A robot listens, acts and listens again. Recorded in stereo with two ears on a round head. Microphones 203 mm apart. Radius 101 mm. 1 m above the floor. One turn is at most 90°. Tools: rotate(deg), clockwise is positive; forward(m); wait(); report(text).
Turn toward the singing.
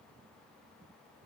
wait()
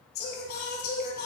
rotate(-50)
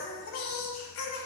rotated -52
rotate(-70)
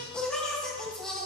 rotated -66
report("Facing the singing, over 4 m away.")